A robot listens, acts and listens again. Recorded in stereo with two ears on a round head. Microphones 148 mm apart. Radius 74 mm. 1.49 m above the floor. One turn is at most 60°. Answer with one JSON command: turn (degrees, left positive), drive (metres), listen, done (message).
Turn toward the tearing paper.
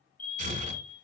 {"turn": -45}
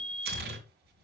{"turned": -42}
{"turn": -60}
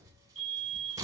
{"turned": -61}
{"turn": -25}
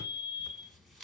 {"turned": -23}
{"done": "Facing the tearing paper."}